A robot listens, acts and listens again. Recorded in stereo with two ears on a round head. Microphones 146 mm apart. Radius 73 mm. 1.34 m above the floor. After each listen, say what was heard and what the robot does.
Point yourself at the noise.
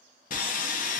The sawing: about 55° left or 125° left. Turn 55° left.
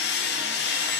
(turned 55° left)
So it is at 70° left. Turn 70° left.
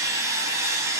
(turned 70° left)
The sawing is now 20° right. Turn 20° right.
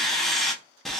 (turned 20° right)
Facing the sawing.